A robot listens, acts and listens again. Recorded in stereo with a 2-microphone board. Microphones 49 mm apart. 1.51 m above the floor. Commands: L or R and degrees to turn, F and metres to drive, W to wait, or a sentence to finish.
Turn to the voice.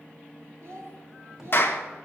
R70
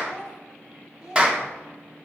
R20
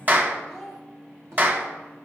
Found it: a child speaking, straight ahead, 2 to 4 m away.